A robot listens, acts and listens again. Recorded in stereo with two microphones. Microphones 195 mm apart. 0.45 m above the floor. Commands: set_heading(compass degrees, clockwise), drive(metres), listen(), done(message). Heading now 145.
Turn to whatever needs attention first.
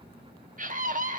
set_heading(190)
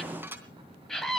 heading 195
done("Facing the scream, 2 to 4 m away.")